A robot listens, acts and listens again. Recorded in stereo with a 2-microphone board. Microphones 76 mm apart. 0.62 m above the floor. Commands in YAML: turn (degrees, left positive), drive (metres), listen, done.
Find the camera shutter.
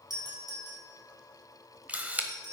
turn: -20
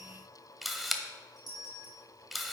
done: "Found it: a camera shutter, straight ahead."